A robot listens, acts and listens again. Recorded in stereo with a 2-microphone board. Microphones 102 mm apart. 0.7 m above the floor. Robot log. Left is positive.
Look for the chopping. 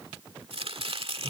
note: The chopping: about 65° right or 115° right.
cmd yaw -65
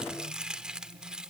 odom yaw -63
note: So it is at 10° right.
cmd yaw -10
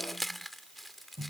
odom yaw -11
end: Found it: chopping, straight ahead.